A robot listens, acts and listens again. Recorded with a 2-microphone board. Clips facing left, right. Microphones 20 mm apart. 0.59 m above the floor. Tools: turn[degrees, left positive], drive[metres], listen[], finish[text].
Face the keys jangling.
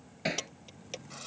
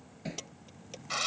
Thought: The keys jangling: about 25° left or 155° left.
Action: turn[25]
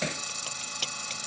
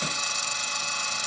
Action: listen[]
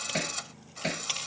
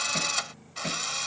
Action: listen[]
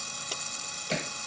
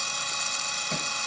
Action: finish[I heard keys jangling, but can't make it out now. It was about straight ahead or 130° left.]